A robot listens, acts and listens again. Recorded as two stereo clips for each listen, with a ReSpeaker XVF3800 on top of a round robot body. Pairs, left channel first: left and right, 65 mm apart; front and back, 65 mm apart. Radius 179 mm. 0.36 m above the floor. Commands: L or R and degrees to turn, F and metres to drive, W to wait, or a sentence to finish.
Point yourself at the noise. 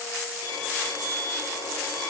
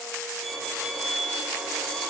L90
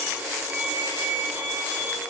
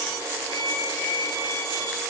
R25
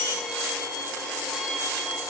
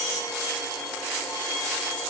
Facing the violin, over 4 m away.